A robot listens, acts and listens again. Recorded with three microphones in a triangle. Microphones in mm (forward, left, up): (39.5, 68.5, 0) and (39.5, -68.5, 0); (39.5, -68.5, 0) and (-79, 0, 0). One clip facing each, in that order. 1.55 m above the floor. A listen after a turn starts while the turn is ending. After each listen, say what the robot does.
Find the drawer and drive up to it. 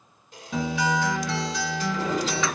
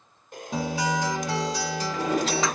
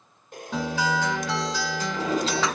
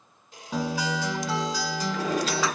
Turn 90° right.
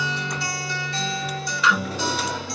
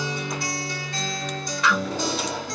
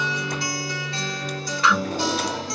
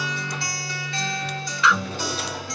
Keep listening.
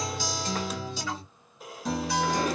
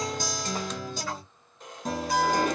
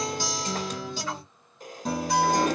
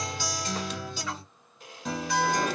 Turn 30° right.
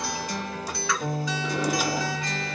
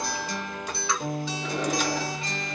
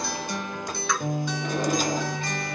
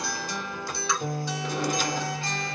Keep listening.
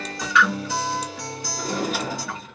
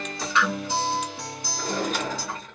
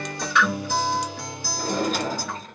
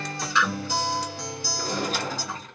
Drive 1.0 m forward.
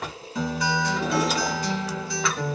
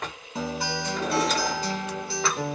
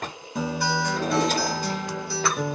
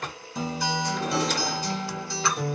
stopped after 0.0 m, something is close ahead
Something is in my way. I am facing the drawer but have not reached it.